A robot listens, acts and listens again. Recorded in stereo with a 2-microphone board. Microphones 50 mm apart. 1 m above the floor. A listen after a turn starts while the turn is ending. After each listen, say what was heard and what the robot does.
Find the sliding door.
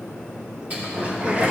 The sliding door: about 35° right or 145° right. Turn 35° right.
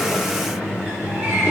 So it is at 115° right. Turn 115° right.
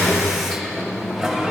Found it: a sliding door, straight ahead, 2 to 4 m away.